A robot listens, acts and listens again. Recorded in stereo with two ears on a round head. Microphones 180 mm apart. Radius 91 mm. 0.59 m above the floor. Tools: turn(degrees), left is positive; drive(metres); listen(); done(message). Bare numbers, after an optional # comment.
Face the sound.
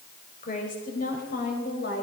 # The woman speaking: about 50° left or 130° left.
turn(50)
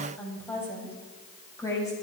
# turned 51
# So it is at 15° left.
turn(15)
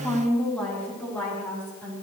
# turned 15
# The woman speaking is now 10° left.
turn(10)
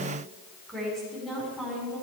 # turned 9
done("Found it: a woman speaking, straight ahead.")